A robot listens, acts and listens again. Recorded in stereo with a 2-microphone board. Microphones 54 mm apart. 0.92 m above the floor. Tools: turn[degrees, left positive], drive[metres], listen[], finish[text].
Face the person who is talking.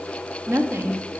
Thought: The woman speaking: about 50° right or 130° right.
Action: turn[-50]
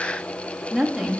Action: finish[Found it: a woman speaking, straight ahead, 1 to 2 m away.]